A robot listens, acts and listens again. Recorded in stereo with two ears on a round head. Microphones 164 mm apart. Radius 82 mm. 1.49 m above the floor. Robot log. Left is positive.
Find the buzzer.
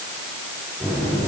cmd yaw +30
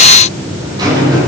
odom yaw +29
note: So it is at 20° right.
cmd yaw -20
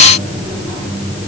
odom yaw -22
end: Facing the buzzer, over 4 m away.